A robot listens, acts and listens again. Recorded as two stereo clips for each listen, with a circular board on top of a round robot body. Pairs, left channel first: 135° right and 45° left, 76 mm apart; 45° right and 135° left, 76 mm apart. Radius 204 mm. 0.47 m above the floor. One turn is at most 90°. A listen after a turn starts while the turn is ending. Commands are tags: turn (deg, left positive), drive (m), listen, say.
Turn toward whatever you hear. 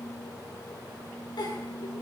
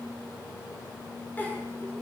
<turn deg="-90"/>
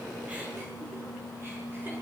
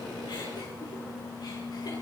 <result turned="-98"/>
<turn deg="-15"/>
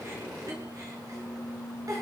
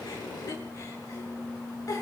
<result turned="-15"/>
<say>Facing the giggle, over 4 m away.</say>